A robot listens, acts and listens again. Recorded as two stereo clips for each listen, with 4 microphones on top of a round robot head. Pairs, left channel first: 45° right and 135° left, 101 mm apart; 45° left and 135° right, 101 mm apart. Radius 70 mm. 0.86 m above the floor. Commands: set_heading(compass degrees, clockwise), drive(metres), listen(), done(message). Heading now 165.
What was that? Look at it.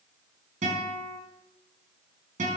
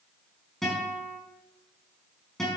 set_heading(35)
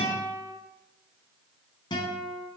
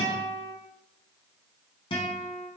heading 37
done("Facing the guitar.")